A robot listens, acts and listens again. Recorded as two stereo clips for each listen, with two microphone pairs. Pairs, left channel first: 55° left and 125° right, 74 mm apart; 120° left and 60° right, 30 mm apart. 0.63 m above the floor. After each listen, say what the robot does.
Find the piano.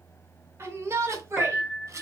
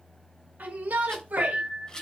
Turn 40° right.
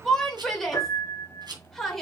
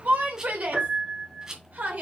Facing the piano.